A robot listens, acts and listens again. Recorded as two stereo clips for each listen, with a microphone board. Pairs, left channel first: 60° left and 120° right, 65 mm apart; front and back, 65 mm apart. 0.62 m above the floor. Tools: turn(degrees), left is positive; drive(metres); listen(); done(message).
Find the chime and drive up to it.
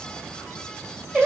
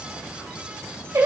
listen()
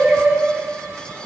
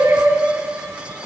listen()
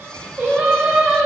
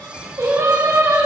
done("I can't make out a chime, only singing.")